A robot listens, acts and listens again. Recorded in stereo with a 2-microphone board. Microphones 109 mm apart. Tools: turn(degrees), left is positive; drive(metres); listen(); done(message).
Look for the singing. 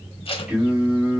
turn(degrees=-20)
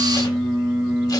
turn(degrees=-30)
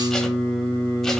done("Found it: singing, straight ahead, 1 to 2 m away.")